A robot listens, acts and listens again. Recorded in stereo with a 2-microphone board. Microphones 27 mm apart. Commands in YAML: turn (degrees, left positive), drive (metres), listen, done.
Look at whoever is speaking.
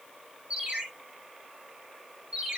listen: true
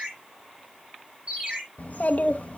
turn: 65
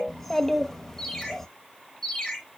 turn: 10
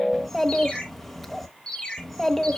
done: "Facing the child speaking, under 1 m away."